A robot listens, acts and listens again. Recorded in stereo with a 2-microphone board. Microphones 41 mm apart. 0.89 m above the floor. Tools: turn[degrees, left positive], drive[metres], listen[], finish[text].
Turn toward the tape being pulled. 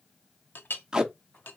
Thought: The tape being pulled: about 20° right or 160° right.
Action: turn[-20]
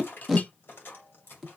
Action: finish[Found it: tape being pulled, straight ahead.]